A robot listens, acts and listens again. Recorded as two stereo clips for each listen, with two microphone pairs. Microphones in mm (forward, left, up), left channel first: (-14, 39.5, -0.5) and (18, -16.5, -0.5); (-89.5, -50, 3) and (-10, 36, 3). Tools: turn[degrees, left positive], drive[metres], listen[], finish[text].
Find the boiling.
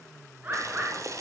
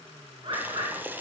Thought: The boiling: 30° right.
Action: turn[-30]
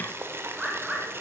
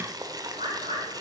Thought: The boiling is now 10° right.
Action: turn[-10]
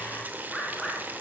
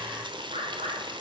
Action: finish[Facing the boiling.]